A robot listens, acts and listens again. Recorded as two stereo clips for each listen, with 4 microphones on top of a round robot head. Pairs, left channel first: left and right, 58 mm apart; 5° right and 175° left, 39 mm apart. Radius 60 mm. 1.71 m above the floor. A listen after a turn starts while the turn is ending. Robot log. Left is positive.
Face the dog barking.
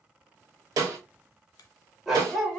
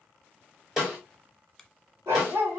note: The dog barking: straight behind.
cmd yaw +180
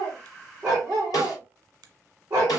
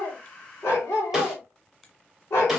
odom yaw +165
note: The dog barking is now 25° right.
cmd yaw -25
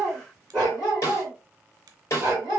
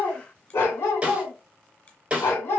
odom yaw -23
note: The dog barking is now 10° right.
cmd yaw -10
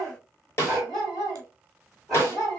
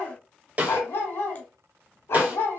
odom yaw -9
end: Found it: a dog barking, straight ahead, 2 to 4 m away.